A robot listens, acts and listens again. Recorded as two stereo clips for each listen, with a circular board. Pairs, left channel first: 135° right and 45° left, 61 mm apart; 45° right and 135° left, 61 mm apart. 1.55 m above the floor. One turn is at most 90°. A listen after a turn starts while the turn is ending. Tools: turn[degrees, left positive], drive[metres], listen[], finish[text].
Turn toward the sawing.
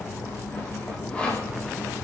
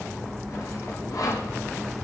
Thought: The sawing: 65° right.
Action: turn[-65]
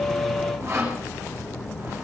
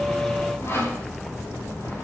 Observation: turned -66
Action: finish[Facing the sawing.]